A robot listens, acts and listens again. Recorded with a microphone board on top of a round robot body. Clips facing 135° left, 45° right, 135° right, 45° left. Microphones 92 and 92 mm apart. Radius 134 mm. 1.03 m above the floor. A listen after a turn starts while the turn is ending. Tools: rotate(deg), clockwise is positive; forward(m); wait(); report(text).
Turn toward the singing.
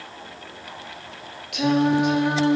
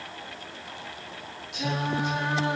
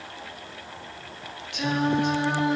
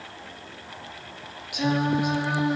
rotate(-130)
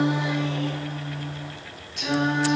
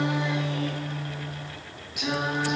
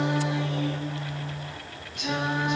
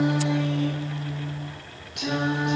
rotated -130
rotate(-40)
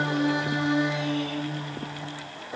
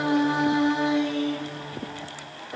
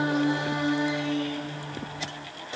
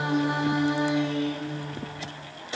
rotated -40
rotate(-15)
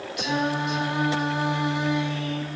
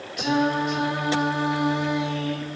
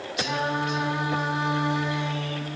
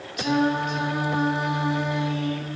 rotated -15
report("Facing the singing, 2 to 4 m away.")